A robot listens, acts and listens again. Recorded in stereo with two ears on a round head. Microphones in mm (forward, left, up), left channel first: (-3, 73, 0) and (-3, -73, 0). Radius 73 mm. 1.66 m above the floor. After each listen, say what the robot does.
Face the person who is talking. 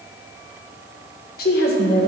Turn 60° left.
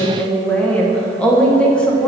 Found it: a woman speaking, straight ahead.